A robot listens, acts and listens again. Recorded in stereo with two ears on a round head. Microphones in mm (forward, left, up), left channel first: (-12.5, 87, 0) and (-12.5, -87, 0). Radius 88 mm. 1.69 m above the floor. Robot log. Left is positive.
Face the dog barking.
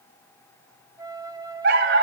note: The dog barking: about 60° right or 120° right.
cmd yaw -60
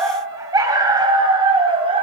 note: So it is at 30° right.
cmd yaw -30
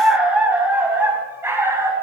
note: The dog barking is now 15° right.
cmd yaw -15
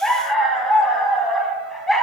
end: Facing the dog barking, over 4 m away.